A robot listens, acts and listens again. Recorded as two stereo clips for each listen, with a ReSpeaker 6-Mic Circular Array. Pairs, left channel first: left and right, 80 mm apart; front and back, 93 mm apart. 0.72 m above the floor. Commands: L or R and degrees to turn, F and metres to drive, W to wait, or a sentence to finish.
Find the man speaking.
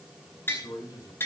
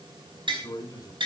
L50
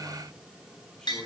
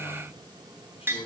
Found it: a man speaking, straight ahead.